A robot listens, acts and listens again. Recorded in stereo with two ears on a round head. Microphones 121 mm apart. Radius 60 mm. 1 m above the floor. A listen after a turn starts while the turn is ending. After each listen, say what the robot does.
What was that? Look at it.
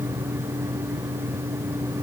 Keep listening.
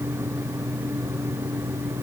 Keep listening.
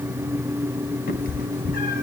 Turn 70° left.
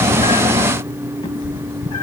Turn 40° left.
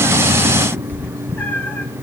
Turn 15° left.
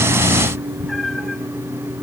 Found it: a cat meowing, straight ahead.